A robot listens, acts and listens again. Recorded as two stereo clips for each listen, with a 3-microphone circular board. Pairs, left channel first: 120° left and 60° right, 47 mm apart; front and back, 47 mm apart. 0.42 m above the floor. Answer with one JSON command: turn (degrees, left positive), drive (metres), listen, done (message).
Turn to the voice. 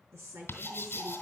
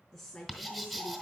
{"turn": -85}
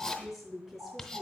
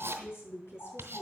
{"turn": 25}
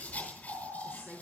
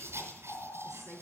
{"done": "Found it: a woman speaking, straight ahead, over 4 m away."}